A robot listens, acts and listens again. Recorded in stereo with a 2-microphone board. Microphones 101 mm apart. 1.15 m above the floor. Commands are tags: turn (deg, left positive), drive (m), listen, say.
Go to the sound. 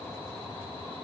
<listen/>
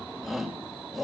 <turn deg="-30"/>
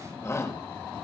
<turn deg="25"/>
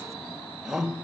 <drive m="1.0"/>
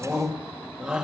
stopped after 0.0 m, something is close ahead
<turn deg="-10"/>
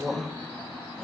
<say>Something is in my way. I am facing the shout but have not reached it.</say>